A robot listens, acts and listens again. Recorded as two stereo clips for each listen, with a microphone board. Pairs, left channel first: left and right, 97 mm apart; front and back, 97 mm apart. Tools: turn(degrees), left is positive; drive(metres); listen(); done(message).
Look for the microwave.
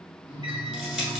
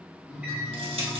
turn(degrees=-115)
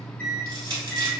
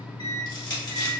turn(degrees=15)
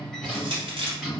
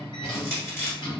done("Found it: a microwave, straight ahead.")